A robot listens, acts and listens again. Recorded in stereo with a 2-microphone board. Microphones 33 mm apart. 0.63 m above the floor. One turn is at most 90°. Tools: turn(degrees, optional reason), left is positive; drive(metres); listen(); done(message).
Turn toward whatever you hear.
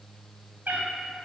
turn(degrees=-90)
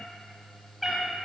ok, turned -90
turn(degrees=-10, reason="So it is at 10° right.")
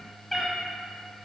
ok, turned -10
done("Facing the cat meowing.")